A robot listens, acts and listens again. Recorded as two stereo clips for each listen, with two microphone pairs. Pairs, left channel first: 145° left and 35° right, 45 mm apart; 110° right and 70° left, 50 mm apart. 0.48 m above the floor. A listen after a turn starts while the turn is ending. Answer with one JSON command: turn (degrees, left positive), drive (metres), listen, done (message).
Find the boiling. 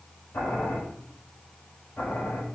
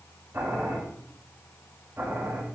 {"turn": 115}
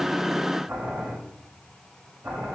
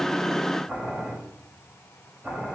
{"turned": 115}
{"done": "Found it: boiling, straight ahead."}